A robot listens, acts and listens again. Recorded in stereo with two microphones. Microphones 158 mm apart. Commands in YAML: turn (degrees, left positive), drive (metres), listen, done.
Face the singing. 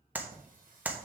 turn: -60
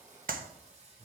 turn: -40
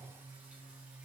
done: "Found it: singing, straight ahead, 2 to 4 m away."